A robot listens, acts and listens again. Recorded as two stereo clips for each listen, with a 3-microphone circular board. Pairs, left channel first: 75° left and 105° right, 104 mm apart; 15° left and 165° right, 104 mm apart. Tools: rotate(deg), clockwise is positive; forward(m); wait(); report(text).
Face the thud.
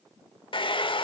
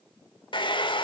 wait()
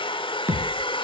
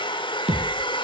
rotate(170)
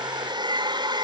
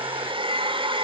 report("I heard a thud from this way, but can't make it out now.")